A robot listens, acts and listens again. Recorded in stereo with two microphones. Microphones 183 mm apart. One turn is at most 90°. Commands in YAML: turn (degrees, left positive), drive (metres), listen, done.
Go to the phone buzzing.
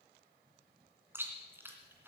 listen: true
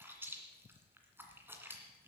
listen: true
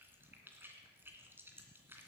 done: "I can't make out a phone buzzing, only chewing."